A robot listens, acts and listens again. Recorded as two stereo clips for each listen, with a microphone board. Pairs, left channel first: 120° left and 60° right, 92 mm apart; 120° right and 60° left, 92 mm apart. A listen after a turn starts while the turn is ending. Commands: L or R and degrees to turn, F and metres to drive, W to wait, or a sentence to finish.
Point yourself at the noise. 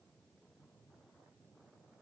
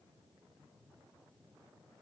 W
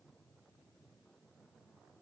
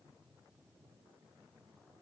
W
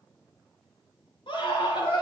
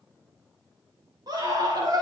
L100
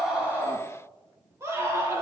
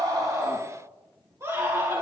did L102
Found it: a scream, straight ahead.